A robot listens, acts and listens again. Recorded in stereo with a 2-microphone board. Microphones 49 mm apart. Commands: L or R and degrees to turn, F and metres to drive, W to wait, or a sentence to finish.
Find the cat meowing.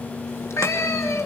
L65
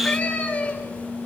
L25
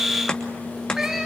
R10
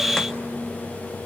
W
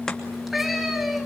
Facing the cat meowing.